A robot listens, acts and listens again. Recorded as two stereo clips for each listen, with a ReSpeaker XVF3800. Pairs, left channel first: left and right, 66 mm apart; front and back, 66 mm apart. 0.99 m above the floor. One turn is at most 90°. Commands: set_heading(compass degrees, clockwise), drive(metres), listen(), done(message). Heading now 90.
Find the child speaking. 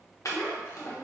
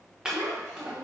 set_heading(0)
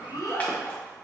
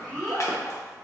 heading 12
set_heading(287)
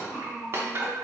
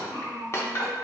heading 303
set_heading(273)
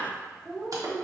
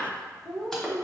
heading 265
done("Facing the child speaking.")